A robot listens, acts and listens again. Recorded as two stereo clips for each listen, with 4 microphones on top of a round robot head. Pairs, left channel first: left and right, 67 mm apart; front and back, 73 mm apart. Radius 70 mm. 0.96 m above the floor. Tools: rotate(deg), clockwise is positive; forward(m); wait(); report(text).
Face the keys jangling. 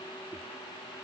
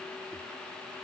wait()
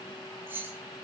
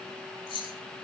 rotate(25)
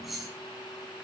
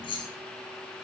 report("Found it: keys jangling, straight ahead.")